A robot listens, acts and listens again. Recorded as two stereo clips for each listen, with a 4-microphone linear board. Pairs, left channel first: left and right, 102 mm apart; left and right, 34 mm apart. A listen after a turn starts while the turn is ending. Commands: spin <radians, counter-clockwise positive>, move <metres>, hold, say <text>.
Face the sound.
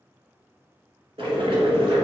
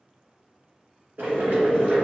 spin -1.13
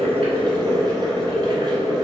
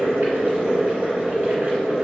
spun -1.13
spin -0.79
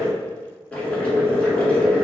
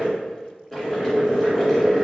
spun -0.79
spin 0.26
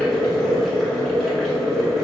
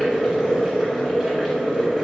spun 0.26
say Found it: boiling, straight ahead.